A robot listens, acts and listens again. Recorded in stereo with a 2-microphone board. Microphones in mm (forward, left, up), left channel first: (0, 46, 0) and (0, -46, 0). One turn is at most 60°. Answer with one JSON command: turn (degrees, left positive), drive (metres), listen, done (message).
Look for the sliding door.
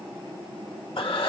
{"listen": true}
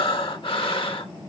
{"listen": true}
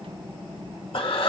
{"done": "I can't make out a sliding door, only breathing."}